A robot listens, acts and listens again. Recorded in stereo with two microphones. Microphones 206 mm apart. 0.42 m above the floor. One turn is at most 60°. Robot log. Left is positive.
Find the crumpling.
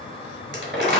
note: The crumpling: about 65° right or 115° right.
cmd yaw -60
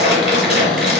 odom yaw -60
note: So it is at 55° right.
cmd yaw -55
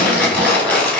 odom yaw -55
end: Found it: crumpling, straight ahead.